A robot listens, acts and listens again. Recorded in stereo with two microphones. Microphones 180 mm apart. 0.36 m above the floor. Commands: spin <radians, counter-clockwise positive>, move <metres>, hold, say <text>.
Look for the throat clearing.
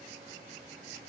hold
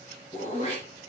spin 0.61
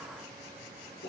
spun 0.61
spin 1.83
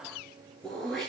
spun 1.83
say Facing the throat clearing.